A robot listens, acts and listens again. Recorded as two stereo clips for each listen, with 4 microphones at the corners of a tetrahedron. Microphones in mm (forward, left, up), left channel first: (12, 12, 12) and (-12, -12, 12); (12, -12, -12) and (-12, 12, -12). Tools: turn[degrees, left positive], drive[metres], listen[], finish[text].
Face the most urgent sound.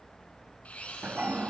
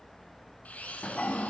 Action: listen[]
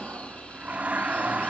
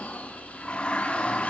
Action: listen[]
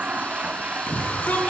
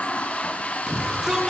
Thought: The shout: 65° left.
Action: turn[65]
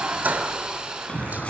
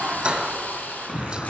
Action: finish[Facing the shout, 2 to 4 m away.]